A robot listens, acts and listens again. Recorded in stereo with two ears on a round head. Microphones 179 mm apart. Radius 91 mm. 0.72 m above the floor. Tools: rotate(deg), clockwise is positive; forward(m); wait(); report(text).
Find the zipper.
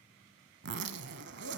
rotate(60)
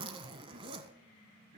rotate(30)
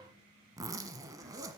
rotate(20)
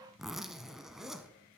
report("Facing the zipper, under 1 m away.")